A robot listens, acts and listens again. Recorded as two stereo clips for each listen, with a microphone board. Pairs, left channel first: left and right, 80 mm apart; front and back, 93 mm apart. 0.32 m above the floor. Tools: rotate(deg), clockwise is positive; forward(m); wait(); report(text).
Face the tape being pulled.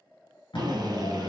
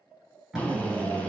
rotate(-95)
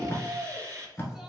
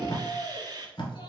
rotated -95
rotate(-30)
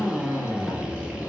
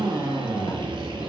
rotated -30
wait()
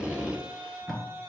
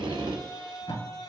report("Facing the tape being pulled.")